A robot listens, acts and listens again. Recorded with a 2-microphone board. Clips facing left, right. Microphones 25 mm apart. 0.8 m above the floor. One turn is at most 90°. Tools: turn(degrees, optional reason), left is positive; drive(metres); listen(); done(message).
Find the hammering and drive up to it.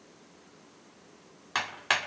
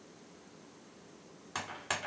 turn(degrees=55, reason="The hammering: about 55° left or 125° left.")
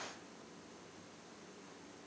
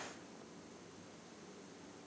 listen()
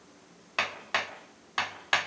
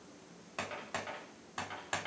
turn(degrees=70, reason="So it is at 70° left.")
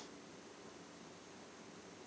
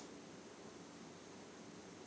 listen()
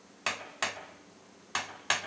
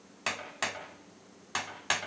drive(metres=1.0)
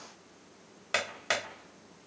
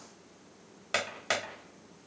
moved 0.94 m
drive(metres=1.0)
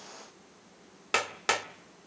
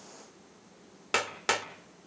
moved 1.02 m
drive(metres=1.0)
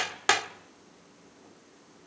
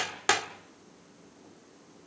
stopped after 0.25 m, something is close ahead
turn(degrees=10, reason="The hammering is now 10° left.")
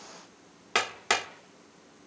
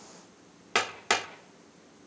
done("Arrived at the hammering, straight ahead.")